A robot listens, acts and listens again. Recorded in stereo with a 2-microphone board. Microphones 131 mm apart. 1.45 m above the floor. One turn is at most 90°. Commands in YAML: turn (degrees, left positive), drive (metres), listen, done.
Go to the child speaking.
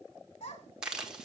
turn: 65
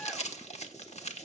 listen: true
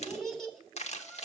drive: 1.0
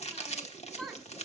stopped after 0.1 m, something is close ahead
done: "Something is in my way. I am facing the child speaking but have not reached it."